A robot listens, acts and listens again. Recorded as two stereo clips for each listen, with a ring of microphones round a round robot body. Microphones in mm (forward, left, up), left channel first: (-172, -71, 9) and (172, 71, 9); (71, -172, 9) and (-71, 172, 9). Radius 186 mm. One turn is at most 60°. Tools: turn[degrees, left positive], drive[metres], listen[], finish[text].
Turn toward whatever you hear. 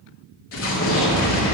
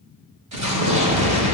Thought: The explosion: 150° left.
Action: turn[60]
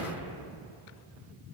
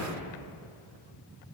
Thought: Nothing new. It was at 90° left.
Action: turn[60]
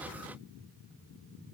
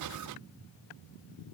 Thought: Nothing new. It was at 30° left.
Action: turn[30]
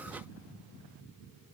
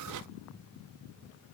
Action: finish[I heard an explosion from this way, but can't make it out now.]